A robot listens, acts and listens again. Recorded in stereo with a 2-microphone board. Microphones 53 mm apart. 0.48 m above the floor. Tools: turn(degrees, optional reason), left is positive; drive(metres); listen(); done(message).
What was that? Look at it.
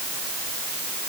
listen()
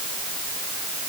listen()
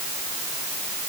done("I can't make out anything.")